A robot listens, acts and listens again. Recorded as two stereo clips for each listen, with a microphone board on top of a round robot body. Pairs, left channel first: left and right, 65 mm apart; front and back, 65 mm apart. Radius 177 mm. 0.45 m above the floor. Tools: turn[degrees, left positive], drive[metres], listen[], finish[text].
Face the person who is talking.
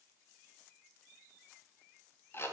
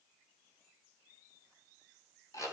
Action: listen[]
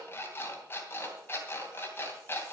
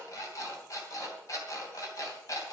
Action: listen[]
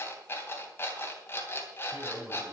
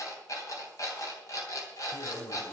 Thought: The man speaking: 35° right.
Action: turn[-35]
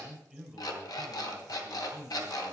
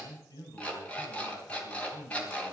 Action: finish[Facing the man speaking, over 4 m away.]